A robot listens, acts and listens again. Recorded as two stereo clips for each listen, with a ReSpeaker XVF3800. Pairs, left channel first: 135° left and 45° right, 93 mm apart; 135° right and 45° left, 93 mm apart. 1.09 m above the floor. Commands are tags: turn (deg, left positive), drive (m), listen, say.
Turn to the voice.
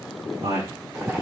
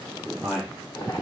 <turn deg="-45"/>
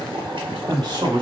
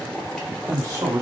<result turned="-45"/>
<turn deg="-10"/>
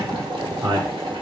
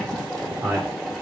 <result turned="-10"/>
<turn deg="-15"/>
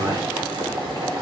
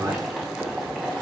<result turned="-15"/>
<turn deg="-15"/>
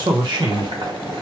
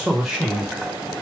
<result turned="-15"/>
<turn deg="-45"/>
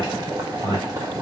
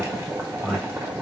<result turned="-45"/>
<turn deg="-35"/>
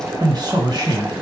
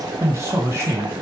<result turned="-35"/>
<turn deg="-10"/>
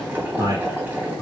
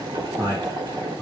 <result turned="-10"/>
<say>Found it: a man speaking, straight ahead.</say>